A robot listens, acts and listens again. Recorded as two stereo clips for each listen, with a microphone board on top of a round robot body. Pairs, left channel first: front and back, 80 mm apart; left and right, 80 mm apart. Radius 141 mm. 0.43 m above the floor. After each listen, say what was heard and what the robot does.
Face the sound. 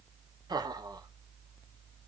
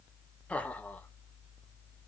The laughter: 160° left. Turn 160° left.
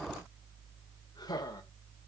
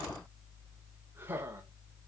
The laughter is now 30° right. Turn 30° right.
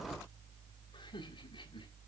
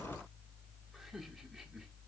Keep listening.
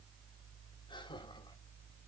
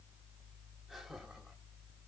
Keep listening.
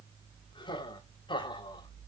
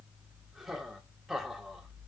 Found it: laughter, straight ahead.